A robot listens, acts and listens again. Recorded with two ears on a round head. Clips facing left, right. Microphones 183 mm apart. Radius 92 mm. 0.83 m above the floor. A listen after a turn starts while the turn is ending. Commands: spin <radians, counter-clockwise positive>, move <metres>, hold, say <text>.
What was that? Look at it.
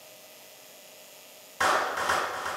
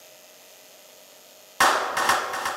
spin -1.22
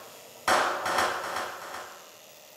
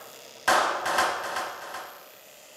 say Found it: a clap, straight ahead, 1 to 2 m away.